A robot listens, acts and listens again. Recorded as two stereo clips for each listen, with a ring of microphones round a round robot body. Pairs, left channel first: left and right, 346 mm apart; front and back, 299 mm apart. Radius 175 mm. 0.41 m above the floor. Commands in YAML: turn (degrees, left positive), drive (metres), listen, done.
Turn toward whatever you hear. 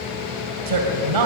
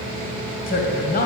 turn: -65
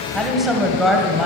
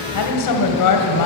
done: "Found it: a woman speaking, straight ahead, 2 to 4 m away."